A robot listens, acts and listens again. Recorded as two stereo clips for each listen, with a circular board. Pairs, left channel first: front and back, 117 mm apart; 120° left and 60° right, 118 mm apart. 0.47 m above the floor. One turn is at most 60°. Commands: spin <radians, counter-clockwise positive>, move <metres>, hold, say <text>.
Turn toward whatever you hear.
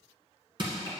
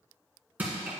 spin -1.05
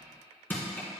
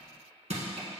spin -1.05
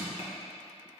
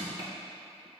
say Facing the crushing, 1 to 2 m away.